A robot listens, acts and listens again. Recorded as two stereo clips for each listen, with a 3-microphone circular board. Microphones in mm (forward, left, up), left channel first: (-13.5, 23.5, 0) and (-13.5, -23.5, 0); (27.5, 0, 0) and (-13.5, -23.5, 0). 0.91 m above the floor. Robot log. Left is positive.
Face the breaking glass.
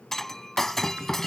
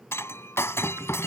end: Found it: breaking glass, straight ahead.